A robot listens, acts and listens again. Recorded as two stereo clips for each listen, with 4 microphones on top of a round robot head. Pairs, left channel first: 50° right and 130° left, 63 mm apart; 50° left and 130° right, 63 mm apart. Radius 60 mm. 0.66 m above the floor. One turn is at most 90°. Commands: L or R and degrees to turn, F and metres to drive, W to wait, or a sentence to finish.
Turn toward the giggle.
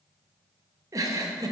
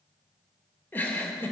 L90
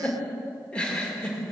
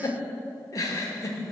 L20
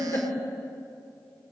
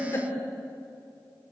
Found it: a giggle, straight ahead, 2 to 4 m away.